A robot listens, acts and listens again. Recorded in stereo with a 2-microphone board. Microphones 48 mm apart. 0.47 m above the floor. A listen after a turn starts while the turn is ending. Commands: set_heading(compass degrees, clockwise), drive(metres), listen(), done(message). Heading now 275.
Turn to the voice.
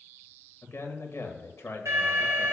set_heading(210)
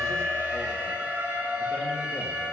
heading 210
listen()
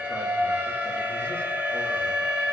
listen()
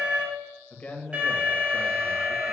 set_heading(175)
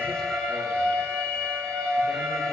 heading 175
listen()
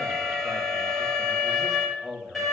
done("Facing the man speaking, 1 to 2 m away.")